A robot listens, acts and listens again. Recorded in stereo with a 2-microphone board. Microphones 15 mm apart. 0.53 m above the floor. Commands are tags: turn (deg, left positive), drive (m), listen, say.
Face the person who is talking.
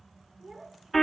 <turn deg="-75"/>
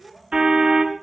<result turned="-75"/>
<turn deg="-30"/>
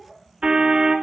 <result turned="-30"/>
<say>Facing the child speaking.</say>